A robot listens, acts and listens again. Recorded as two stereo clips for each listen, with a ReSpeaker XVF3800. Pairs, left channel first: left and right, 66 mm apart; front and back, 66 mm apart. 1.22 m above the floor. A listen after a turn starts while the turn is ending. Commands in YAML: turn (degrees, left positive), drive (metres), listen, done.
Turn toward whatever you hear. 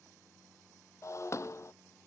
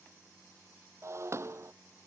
turn: 135
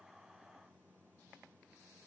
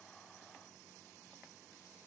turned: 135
done: "I heard breaking glass from this way, but can't make it out now."